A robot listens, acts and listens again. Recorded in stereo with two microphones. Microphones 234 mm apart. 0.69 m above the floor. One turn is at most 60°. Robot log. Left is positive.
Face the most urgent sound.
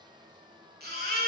note: The baby crying: about 40° right or 140° right.
cmd yaw -40
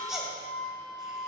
end: Facing the baby crying, 1 to 2 m away.